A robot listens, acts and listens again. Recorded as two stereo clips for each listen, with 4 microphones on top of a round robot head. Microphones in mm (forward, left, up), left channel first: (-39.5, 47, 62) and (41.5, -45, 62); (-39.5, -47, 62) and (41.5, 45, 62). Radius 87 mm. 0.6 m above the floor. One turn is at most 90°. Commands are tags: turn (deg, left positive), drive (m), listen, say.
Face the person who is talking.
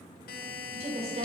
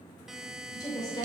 <turn deg="-75"/>
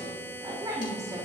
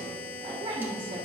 <turn deg="10"/>
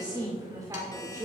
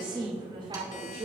<turn deg="15"/>
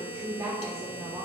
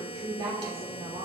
<turn deg="15"/>
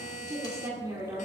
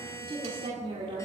<turn deg="15"/>
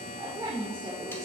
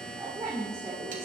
<say>Facing the woman speaking, 2 to 4 m away.</say>